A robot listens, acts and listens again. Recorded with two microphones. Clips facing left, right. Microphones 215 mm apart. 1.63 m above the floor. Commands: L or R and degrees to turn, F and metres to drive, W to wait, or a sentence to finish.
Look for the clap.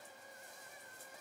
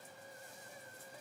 W
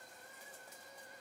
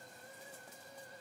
W
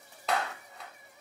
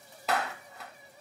L30
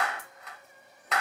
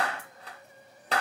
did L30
R35
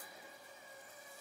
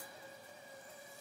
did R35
W
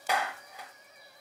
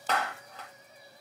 L10
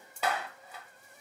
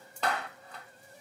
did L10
L10
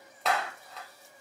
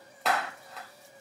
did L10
Found it: a clap, straight ahead.